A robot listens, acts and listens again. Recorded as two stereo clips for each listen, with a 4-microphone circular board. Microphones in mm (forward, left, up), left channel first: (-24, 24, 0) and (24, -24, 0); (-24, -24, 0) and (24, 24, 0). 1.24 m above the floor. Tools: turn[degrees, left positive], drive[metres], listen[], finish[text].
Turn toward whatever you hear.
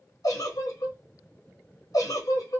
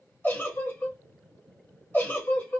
Thought: The giggle: 165° left.
Action: turn[165]
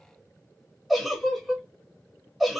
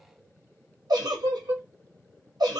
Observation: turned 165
Thought: The giggle is now 45° left.
Action: turn[45]
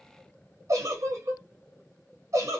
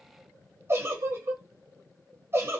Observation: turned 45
Action: finish[Facing the giggle.]